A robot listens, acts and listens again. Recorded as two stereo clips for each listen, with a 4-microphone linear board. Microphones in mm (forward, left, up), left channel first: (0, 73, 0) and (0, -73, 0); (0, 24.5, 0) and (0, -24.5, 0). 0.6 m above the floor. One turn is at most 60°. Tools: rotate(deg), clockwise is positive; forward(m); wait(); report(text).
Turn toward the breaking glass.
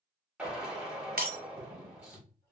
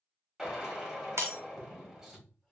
rotate(60)
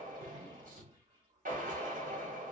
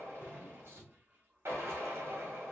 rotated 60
rotate(30)
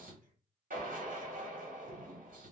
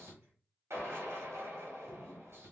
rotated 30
report("I heard breaking glass from this way, but can't make it out now.")